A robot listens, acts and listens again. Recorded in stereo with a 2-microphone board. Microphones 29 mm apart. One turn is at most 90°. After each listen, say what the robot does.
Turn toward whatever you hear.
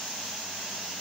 Keep listening.
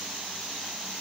Keep listening.
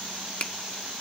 Turn 45° left.
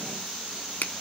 Turn 90° left.
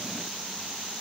Keep listening.
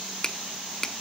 Turn 20° left.
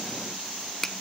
Turn 10° left.
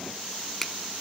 Found it: a finger snap, straight ahead.